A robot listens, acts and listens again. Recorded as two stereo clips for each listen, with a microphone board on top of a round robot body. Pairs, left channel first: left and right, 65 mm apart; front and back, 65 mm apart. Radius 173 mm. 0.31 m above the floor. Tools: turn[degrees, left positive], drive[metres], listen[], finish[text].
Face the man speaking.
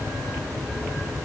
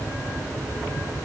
Action: listen[]
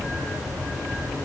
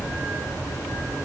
Action: listen[]
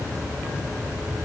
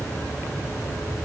Action: finish[I can't make out a man speaking.]